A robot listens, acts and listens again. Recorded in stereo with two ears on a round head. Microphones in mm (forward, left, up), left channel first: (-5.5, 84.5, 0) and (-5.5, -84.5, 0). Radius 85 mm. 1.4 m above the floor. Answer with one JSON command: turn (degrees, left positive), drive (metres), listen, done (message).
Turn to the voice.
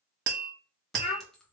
{"turn": 35}
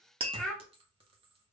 {"done": "Found it: a child speaking, straight ahead."}